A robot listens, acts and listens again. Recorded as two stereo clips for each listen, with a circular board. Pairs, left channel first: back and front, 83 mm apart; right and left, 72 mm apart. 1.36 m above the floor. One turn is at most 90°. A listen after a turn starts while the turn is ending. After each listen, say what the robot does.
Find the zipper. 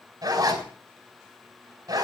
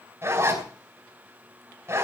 Turn 35° left.
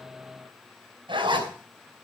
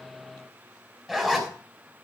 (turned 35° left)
Facing the zipper, over 4 m away.